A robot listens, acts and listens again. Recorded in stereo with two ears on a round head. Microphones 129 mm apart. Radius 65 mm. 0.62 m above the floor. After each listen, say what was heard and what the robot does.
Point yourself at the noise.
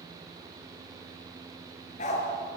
The dog barking: about 55° left or 125° left. Turn 55° left.
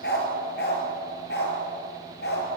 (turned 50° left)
So it is at 80° left. Turn 80° left.
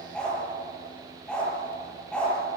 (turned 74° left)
Found it: a dog barking, straight ahead, over 4 m away.